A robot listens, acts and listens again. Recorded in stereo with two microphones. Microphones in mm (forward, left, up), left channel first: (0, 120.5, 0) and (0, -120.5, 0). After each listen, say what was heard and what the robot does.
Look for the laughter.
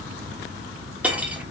Keep listening.
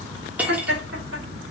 The laughter: about 70° right or 110° right. Turn 70° right.
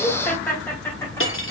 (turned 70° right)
So it is at 10° left. Turn 10° left.
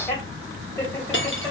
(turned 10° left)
Keep listening.
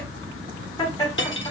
The laughter is now 15° left. Turn 15° left.
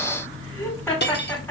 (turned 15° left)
Found it: laughter, straight ahead, 2 to 4 m away.